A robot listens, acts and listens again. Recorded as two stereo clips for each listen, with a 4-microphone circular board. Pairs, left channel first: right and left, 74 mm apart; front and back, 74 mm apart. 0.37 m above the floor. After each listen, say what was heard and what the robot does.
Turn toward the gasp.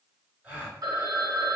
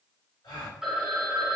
The gasp: 15° left. Turn 15° left.
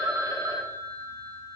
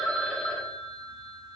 Facing where the gasp came from. I can't hear it now.